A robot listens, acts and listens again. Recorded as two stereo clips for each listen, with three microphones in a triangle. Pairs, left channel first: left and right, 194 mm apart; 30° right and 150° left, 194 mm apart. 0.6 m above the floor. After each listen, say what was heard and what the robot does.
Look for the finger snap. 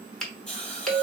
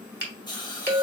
The finger snap: 175° left. Turn 175° left.
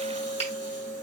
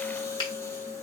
The finger snap is now 35° left. Turn 35° left.
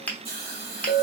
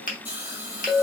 The finger snap is now 10° left. Turn 10° left.
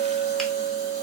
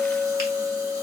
Keep listening.
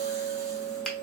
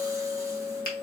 Facing the finger snap, under 1 m away.